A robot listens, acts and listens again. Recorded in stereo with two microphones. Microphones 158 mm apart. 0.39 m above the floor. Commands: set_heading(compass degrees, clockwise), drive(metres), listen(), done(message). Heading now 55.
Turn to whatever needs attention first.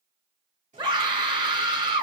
set_heading(85)
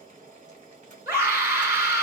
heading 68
set_heading(88)
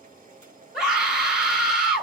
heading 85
done("Facing the scream, 1 to 2 m away.")